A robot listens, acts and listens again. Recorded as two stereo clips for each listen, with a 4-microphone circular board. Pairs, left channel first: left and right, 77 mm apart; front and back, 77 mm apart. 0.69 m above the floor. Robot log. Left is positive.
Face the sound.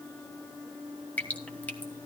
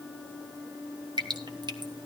note: The dripping: 160° left.
cmd yaw +160
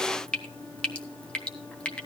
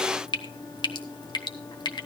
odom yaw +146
note: The dripping is now 15° left.
cmd yaw +15
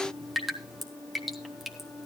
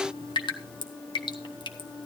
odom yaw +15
end: Found it: dripping, straight ahead, 1 to 2 m away.